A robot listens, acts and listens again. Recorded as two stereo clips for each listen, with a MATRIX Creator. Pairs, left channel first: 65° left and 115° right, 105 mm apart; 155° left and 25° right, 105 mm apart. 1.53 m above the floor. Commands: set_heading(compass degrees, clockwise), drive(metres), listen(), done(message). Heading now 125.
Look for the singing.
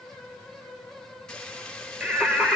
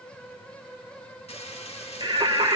set_heading(160)
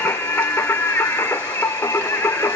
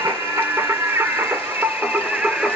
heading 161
set_heading(111)
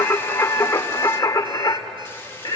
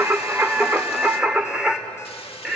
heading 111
set_heading(56)
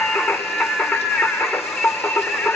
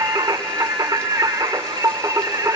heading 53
done("Found it: singing, straight ahead, 1 to 2 m away.")